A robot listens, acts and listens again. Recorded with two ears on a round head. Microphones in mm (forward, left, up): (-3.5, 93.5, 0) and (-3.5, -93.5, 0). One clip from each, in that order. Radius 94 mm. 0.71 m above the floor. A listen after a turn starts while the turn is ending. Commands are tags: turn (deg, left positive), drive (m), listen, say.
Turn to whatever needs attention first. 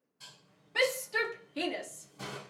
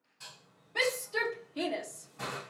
<turn deg="30"/>
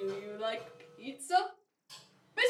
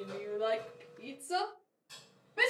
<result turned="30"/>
<turn deg="115"/>
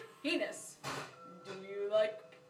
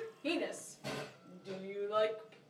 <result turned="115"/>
<turn deg="10"/>
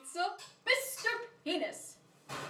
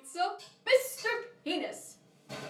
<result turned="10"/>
<say>Found it: a shout, straight ahead, under 1 m away.</say>